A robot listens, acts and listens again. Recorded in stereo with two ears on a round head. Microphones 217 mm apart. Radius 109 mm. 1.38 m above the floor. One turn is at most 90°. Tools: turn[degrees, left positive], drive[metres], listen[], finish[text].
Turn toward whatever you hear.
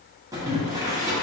Action: turn[-30]
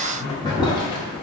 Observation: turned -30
Thought: So it is at 15° left.
Action: turn[15]
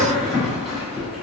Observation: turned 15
Action: finish[Found it: boiling, straight ahead.]